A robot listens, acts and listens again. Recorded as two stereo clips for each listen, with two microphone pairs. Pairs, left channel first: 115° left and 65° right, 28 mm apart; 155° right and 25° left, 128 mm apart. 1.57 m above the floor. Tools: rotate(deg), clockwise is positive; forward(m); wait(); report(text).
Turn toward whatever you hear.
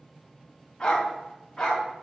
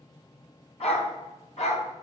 rotate(165)
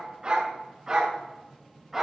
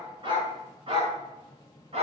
report("Facing the dog barking.")